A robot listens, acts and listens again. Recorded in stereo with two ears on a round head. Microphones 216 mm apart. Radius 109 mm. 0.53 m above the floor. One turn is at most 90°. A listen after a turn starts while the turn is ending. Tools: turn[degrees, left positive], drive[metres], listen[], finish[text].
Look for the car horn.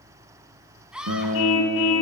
Thought: The car horn: about 60° left or 120° left.
Action: turn[60]
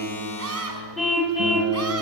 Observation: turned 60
Action: finish[Found it: a car horn, straight ahead, 2 to 4 m away.]